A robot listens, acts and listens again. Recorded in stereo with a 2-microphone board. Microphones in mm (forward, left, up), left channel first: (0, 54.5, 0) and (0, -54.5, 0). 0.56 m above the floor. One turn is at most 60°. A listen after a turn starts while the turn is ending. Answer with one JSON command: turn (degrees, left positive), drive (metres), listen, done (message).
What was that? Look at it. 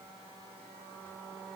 {"listen": true}
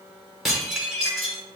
{"turn": -30}
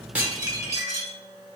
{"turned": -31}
{"turn": -60}
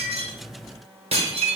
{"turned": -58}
{"turn": -60}
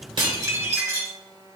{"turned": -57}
{"turn": -30}
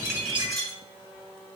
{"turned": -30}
{"done": "Facing the dishes clattering, 1 to 2 m away."}